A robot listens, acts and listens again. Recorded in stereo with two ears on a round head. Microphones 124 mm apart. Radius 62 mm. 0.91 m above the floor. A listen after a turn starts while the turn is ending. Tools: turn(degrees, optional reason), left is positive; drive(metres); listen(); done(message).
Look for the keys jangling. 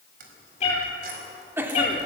turn(degrees=-90)
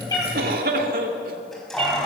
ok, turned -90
done("Facing the keys jangling, over 4 m away.")